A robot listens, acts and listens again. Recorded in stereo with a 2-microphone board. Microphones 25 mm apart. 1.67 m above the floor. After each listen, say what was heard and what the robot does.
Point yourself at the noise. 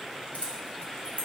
Turn 90° left.
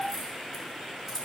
So it is at 20° right. Turn 20° right.
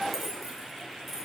The keys jangling is now 15° right. Turn 15° right.
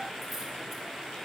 Keep listening.
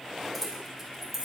The keys jangling is now 10° right. Turn 10° right.
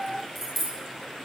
Facing the keys jangling, 2 to 4 m away.